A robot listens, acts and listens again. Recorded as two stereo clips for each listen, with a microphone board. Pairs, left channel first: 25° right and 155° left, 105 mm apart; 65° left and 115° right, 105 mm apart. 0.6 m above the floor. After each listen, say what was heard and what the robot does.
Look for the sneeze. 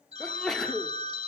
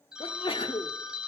The sneeze: 60° left. Turn 60° left.
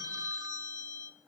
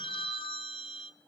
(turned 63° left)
I heard a sneeze from this way, but can't make it out now.